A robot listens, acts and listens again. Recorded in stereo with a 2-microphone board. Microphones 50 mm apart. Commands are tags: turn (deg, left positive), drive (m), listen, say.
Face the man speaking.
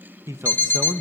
<turn deg="-90"/>
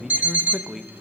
<say>Found it: a man speaking, straight ahead, under 1 m away.</say>